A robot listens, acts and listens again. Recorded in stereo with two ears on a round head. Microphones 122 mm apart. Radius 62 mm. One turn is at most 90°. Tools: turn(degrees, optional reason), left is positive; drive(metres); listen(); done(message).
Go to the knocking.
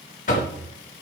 turn(degrees=60, reason="The knocking: about 60° left or 120° left.")
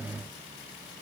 listen()
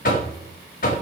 turn(degrees=60, reason="So it is at 60° left.")
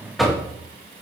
drive(metres=1.0)
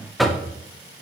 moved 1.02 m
drive(metres=1.0)
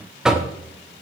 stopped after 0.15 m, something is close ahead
done("Arrived at the knocking, straight ahead.")